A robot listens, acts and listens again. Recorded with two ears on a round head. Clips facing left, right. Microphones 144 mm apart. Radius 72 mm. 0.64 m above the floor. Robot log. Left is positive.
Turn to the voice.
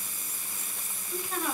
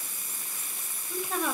note: The woman speaking: about 60° right or 120° right.
cmd yaw -60
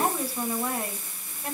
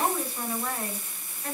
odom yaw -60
note: So it is at 15° left.
cmd yaw +15
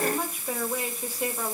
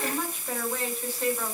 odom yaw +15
note: The woman speaking is now 15° left.
cmd yaw +15
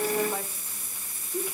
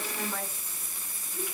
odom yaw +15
note: The woman speaking is now 25° left.
cmd yaw +25
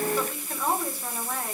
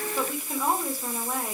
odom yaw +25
note: The woman speaking is now 10° right.
cmd yaw -10
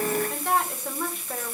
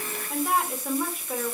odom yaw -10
end: Facing the woman speaking, 2 to 4 m away.